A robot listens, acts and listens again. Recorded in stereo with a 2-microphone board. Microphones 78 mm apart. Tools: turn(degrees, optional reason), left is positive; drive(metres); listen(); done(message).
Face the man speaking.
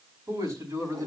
turn(degrees=-45, reason="The man speaking: about 45° right or 135° right.")
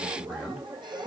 done("Facing the man speaking.")